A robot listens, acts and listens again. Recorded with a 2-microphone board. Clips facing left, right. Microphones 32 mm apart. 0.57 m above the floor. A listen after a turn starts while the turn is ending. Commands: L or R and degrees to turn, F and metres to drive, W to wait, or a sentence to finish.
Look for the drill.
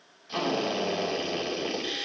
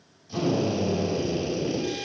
L40
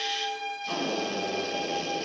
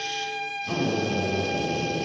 Found it: a drill, straight ahead, over 4 m away.